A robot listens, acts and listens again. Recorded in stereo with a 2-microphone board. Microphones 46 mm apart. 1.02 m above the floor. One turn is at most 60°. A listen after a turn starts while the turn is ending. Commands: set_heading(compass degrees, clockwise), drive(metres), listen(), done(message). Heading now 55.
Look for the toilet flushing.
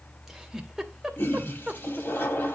set_heading(5)
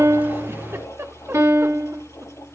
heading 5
set_heading(305)
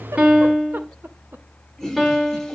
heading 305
done("Found it: a toilet flushing, straight ahead.")